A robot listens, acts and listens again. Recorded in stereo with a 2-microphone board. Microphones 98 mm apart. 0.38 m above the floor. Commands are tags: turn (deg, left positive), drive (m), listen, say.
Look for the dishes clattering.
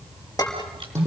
<turn deg="40"/>
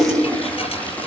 <listen/>
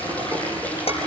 <turn deg="100"/>
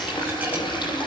<listen/>
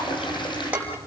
<turn deg="-15"/>
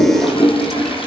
<listen/>
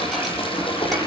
<listen/>
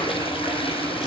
<say>Facing where the dishes clattering came from. I can't hear it now.</say>